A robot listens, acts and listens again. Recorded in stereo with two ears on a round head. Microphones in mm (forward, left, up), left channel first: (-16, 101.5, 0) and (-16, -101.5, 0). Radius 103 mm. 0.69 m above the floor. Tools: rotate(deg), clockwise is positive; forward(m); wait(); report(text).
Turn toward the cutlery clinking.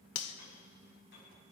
rotate(-70)
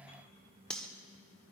report("Found it: cutlery clinking, straight ahead.")